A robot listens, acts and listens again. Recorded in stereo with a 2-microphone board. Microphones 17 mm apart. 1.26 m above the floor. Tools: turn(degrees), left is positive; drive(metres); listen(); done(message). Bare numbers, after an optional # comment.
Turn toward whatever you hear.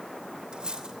# The cutlery clinking: about 60° right or 120° right.
turn(-60)
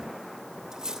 # So it is at 55° right.
turn(-55)
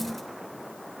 listen()
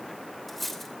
done("Found it: cutlery clinking, straight ahead.")